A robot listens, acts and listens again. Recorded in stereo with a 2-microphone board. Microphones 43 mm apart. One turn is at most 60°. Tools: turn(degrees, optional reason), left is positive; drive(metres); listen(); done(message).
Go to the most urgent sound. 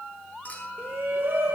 turn(degrees=-60, reason="The shout: about 60° right or 120° right.")
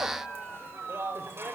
turn(degrees=-60, reason="So it is at 60° right.")
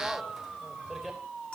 drive(metres=1.0)
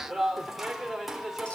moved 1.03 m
drive(metres=1.0)
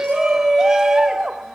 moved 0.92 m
turn(degrees=-10, reason="The shout is now 10° right.")
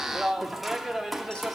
drive(metres=1.0)
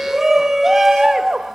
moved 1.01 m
drive(metres=1.0)
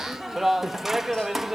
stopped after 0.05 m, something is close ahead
done("I am next to the shout.")